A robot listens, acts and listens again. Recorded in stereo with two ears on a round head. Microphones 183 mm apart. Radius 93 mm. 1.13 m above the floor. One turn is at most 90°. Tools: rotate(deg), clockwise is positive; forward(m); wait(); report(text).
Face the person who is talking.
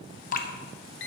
wait()
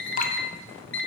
wait()
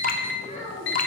rotate(-40)
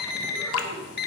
wait()
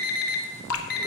wait()
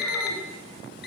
report("I heard a child speaking, but can't make it out now. It was about straight ahead or 100° left.")